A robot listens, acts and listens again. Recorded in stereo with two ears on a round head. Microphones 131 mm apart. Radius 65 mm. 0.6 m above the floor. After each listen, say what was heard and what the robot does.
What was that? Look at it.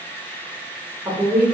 Turn 30° left.
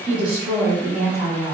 Turn 30° left.
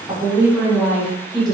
Turn 30° left.
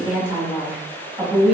So it is at 10° right. Turn 10° right.
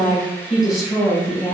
Facing the woman speaking.